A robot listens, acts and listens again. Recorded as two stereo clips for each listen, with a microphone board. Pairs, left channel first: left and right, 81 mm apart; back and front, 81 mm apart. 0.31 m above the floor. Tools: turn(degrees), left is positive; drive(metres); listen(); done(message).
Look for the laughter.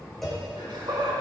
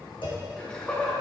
turn(degrees=-105)
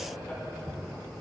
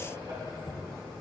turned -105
listen()
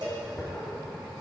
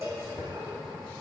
listen()
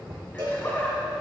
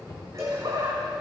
turn(degrees=25)
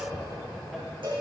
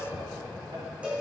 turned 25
listen()
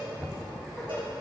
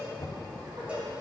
listen()
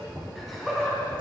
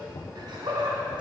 done("Found it: laughter, straight ahead, 1 to 2 m away.")